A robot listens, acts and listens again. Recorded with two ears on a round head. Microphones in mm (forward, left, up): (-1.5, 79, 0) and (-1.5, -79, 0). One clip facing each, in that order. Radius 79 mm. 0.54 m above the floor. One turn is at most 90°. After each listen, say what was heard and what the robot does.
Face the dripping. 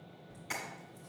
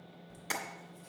Keep listening.
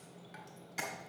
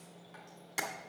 Keep listening.
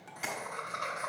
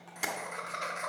I can't make out dripping, only tapping and laughter.